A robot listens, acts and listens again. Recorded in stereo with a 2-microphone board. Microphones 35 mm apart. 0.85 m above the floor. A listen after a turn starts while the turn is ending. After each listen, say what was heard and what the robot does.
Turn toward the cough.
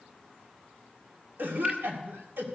The cough: about 75° right or 105° right. Turn 75° right.
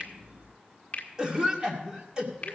So it is at 25° right. Turn 25° right.
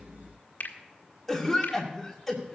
Found it: a cough, straight ahead, 2 to 4 m away.